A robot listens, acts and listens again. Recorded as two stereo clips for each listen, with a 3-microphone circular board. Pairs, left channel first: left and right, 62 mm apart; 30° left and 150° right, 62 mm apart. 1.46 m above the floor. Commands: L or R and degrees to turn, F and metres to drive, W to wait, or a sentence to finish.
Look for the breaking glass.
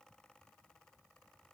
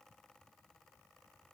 W
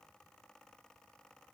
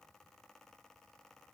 W
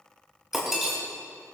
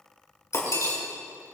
Facing the breaking glass, over 4 m away.